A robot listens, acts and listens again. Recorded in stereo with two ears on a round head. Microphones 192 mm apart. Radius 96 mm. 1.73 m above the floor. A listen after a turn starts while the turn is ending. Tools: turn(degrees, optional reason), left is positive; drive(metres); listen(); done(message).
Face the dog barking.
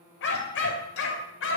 turn(degrees=65, reason="The dog barking: about 65° left or 115° left.")
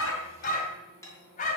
turn(degrees=35, reason="So it is at 35° left.")
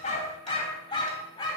turn(degrees=20, reason="The dog barking is now 20° left.")
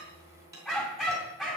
done("Facing the dog barking, over 4 m away.")